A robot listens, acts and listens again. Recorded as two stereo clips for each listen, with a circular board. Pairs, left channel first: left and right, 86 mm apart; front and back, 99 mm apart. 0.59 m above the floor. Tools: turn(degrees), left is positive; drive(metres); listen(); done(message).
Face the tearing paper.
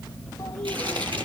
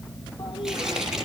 turn(degrees=-95)
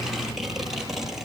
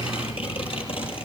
done("Facing the tearing paper.")